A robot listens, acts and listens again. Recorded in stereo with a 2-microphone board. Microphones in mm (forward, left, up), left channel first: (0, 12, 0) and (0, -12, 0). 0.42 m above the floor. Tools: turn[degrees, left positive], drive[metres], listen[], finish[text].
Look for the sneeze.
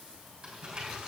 Action: listen[]
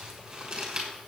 Action: listen[]
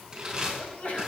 Thought: The sneeze: about 55° left or 125° left.
Action: turn[55]
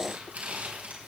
Action: listen[]
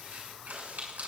Action: finish[I heard a sneeze, but can't make it out now. It was about straight ahead or 70° left.]